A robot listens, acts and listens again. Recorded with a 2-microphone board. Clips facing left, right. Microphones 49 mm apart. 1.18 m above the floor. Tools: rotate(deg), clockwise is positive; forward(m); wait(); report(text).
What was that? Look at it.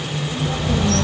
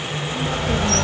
rotate(55)
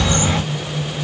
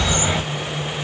rotate(20)
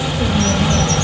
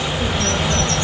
report("Facing the bird.")